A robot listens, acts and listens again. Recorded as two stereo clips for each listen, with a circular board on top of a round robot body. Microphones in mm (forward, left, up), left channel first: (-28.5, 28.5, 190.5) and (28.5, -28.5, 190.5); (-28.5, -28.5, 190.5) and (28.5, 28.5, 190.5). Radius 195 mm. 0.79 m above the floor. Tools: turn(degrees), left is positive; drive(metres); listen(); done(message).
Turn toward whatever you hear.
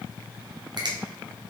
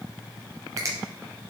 turn(degrees=-10)
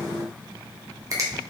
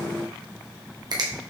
done("Facing the finger snap, 1 to 2 m away.")